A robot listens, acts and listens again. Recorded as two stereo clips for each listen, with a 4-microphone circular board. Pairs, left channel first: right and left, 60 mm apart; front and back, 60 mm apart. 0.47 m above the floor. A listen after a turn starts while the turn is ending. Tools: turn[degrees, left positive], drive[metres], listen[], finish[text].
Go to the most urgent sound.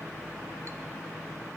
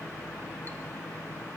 Action: listen[]
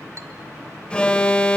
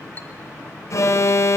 Thought: The alarm: 20° right.
Action: turn[-20]
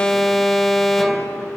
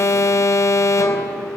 Action: drive[1.0]
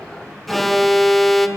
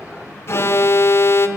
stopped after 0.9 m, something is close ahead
Action: finish[Arrived at the alarm, straight ahead.]